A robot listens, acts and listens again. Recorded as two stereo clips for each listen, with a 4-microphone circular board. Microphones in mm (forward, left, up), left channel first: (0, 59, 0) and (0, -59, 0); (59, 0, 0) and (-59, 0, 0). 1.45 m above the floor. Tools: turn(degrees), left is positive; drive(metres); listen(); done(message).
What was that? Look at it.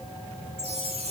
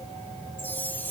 turn(degrees=-70)
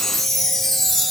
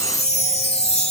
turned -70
done("Facing the chime.")